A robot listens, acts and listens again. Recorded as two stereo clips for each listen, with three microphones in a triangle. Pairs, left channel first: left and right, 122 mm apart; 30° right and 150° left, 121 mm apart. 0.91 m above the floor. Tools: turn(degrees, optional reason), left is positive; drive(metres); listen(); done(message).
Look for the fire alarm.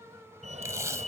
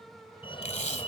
turn(degrees=-75, reason="The fire alarm: 75° right.")
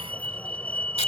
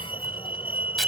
turn(degrees=10, reason="The fire alarm is now 10° left.")
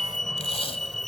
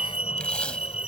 done("Found it: a fire alarm, straight ahead.")